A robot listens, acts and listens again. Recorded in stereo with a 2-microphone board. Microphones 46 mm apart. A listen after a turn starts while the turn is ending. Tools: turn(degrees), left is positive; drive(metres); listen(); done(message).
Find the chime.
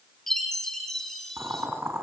turn(degrees=30)
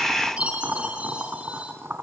turn(degrees=-25)
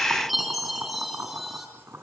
done("Found it: a chime, straight ahead, over 4 m away.")